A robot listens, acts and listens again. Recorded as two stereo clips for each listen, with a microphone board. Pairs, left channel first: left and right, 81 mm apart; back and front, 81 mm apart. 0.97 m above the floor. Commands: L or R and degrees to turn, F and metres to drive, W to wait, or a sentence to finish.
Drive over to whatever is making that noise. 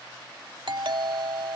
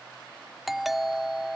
R85
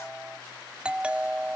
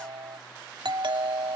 R15
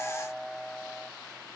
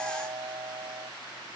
F1.0
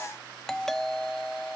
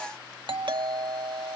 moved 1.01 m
F1.0
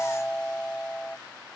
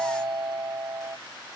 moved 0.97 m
L15
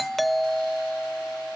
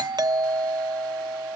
F1.0
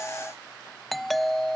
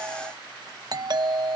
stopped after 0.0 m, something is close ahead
Arrived at the doorbell, straight ahead.